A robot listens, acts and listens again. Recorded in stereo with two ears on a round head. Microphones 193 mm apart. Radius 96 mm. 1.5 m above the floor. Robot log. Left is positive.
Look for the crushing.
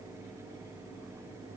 cmd idle
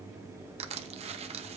note: The crushing: about 30° right or 150° right.
cmd yaw -30
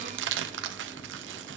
note: So it is at 120° right.
cmd yaw -120
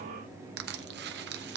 note: The crushing is now 55° right.
cmd yaw -55
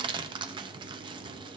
note: The crushing is now 25° right.
cmd yaw -25
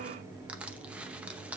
end: Facing the crushing.